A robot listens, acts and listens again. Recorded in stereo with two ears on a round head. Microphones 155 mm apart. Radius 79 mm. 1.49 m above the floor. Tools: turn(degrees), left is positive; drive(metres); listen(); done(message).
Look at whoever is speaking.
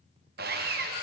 listen()
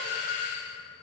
listen()
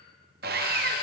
done("I can't make out anyone speaking to turn to.")